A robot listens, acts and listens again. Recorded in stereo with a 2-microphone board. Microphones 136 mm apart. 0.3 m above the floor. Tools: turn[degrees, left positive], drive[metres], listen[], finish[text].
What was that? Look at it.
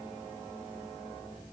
Action: listen[]
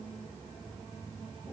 Action: listen[]
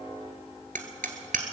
Action: turn[-90]
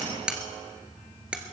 Action: finish[Found it: hammering, straight ahead, 1 to 2 m away.]